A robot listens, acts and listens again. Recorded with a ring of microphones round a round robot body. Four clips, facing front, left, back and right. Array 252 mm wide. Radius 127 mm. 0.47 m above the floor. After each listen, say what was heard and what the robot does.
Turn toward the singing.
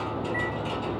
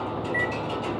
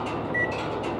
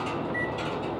Keep listening.
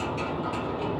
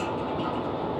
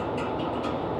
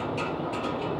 Keep listening.
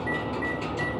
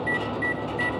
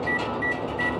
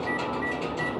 I can't make out singing to turn to.